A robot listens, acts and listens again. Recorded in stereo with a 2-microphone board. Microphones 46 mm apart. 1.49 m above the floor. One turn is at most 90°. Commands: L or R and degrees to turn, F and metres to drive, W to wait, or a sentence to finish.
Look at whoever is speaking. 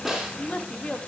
L30
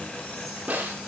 W
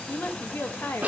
L90
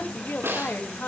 L45
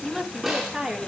R15
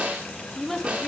Found it: a woman speaking, straight ahead.